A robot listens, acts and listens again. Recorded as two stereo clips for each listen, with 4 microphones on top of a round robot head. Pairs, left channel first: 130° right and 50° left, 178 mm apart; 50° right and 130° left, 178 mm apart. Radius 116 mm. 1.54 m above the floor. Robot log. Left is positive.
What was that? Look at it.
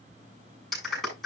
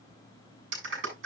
note: The clap: 140° left.
cmd yaw +140
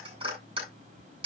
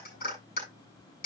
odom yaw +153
note: The clap is now 10° right.
cmd yaw -10
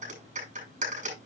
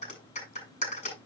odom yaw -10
end: Found it: a clap, straight ahead, over 4 m away.